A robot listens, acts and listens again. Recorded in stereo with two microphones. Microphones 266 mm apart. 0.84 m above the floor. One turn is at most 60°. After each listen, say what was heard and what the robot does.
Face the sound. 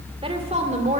The woman speaking: about 30° right or 150° right. Turn 30° right.
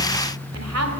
Keep listening.
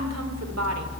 Keep listening.
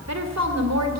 So it is at 100° right. Turn 60° right.
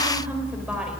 Nothing new. It was at 40° right. Turn 40° right.
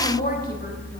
The woman speaking is now 35° left. Turn 35° left.
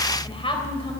The woman speaking is now 20° left. Turn 20° left.
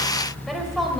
Keep listening.
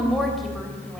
Found it: a woman speaking, straight ahead.